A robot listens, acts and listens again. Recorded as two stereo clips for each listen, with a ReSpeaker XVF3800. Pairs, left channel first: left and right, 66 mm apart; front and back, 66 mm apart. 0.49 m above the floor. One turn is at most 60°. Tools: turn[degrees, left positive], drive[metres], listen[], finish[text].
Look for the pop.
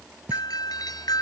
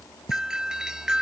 Thought: The pop: 20° right.
Action: turn[-20]
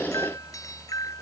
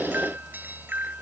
Action: finish[I heard a pop from this way, but can't make it out now.]